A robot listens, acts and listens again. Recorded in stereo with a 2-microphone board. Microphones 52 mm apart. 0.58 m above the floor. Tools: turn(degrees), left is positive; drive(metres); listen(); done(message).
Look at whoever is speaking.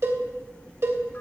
listen()
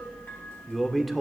turn(degrees=30)
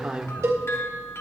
turn(degrees=-25)
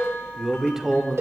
done("Found it: a man speaking, straight ahead, 1 to 2 m away.")